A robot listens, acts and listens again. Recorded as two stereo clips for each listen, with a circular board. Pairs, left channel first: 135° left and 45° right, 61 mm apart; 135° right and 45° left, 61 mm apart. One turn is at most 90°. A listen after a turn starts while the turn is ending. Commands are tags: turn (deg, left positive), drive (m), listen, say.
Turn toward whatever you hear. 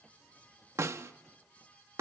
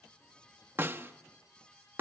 <say>Facing the snare drum.</say>